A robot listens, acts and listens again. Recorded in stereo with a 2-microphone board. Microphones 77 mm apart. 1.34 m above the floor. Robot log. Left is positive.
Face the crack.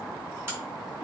note: The crack: about 30° right or 150° right.
cmd yaw -30
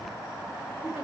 cmd idle
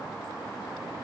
end: I heard a crack, but can't make it out now. It was about straight ahead or 120° right.